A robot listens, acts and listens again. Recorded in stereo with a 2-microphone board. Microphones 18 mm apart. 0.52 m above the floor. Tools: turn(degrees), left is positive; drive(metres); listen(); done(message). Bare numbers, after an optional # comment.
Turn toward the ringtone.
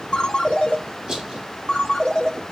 # The ringtone: about 65° left or 115° left.
turn(65)
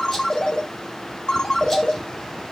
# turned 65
# So it is at 50° left.
turn(50)
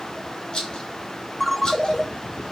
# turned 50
# The ringtone is now 10° left.
turn(10)
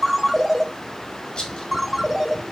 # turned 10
done("Found it: a ringtone, straight ahead, under 1 m away.")